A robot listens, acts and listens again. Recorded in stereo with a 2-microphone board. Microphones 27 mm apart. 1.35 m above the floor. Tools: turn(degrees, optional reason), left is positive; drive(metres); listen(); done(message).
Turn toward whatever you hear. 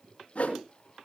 turn(degrees=60, reason="The whoosh: about 60° left or 120° left.")
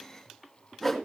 turn(degrees=10, reason="So it is at 10° left.")
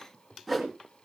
done("Facing the whoosh, 2 to 4 m away.")